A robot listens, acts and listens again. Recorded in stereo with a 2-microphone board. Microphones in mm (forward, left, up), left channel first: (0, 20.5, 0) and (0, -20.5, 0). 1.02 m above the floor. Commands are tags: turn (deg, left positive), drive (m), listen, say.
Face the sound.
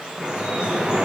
<turn deg="-15"/>
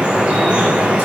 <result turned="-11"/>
<turn deg="-155"/>
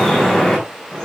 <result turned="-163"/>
<turn deg="10"/>
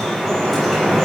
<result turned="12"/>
<say>Found it: dripping, straight ahead.</say>